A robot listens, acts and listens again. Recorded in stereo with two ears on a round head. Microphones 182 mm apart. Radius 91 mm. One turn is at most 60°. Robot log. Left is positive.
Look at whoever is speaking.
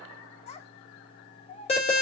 note: The child speaking: about 30° left or 150° left.
cmd yaw +30
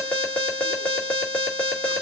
cmd idle
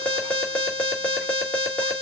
cmd idle
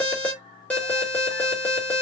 end: I heard a child speaking, but can't make it out now. It was about straight ahead or 120° left.